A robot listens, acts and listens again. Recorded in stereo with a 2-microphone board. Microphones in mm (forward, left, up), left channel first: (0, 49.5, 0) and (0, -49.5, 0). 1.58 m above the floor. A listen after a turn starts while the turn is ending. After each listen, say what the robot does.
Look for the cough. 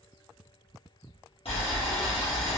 Keep listening.
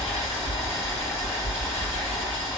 Keep listening.
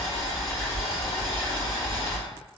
I can't make out a cough to turn to.